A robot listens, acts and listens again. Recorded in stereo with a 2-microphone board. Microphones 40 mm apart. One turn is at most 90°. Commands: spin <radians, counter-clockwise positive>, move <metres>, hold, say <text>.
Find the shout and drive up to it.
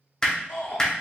spin 1.57
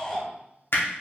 move 1.0
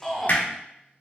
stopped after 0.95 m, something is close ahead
say I am next to the shout.